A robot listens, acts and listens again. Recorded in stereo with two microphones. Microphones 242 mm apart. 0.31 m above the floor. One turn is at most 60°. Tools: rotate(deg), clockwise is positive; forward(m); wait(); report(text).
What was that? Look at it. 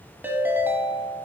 rotate(30)
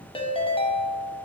rotate(-20)
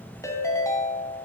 rotate(-10)
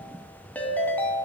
report("Found it: a ringtone, straight ahead.")